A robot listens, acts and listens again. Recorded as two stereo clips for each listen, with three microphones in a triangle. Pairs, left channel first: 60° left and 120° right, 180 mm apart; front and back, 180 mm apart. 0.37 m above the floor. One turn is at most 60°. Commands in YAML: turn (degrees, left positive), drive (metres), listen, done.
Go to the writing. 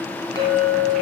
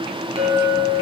listen: true
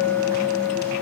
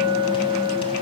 listen: true
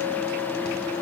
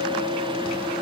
done: "I can't make out writing, only a clink."